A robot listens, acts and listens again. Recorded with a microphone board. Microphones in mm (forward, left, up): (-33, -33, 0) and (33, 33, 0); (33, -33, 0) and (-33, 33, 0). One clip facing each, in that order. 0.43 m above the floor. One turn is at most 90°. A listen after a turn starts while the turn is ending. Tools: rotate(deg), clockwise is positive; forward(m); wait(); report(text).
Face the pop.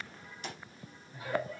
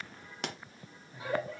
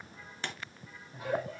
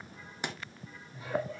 rotate(-60)
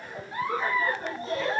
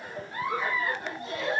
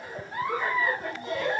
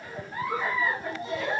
report("I heard a pop from this way, but can't make it out now.")